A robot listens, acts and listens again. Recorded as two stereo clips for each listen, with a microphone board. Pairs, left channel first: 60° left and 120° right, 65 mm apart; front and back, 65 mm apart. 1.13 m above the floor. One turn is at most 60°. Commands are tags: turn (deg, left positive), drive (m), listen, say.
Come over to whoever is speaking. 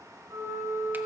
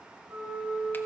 <listen/>
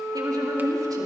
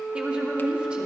<turn deg="-60"/>
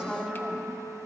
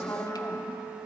<turn deg="-40"/>
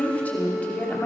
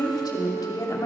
<drive m="1.0"/>
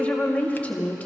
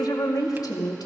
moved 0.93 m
<drive m="1.0"/>
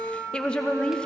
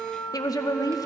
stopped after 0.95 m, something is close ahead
<turn deg="-15"/>
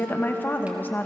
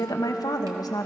<say>I am next to the woman speaking.</say>